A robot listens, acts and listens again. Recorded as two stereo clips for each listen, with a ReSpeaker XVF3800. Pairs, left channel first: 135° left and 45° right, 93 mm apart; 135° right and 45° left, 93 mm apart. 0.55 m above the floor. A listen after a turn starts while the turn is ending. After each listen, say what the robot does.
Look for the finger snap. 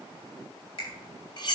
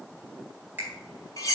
Turn 115° left.
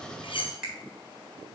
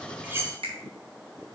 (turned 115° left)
Turn 40° left.
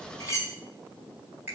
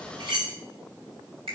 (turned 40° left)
Turn 25° left.
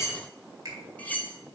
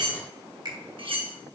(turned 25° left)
Found it: a finger snap, straight ahead.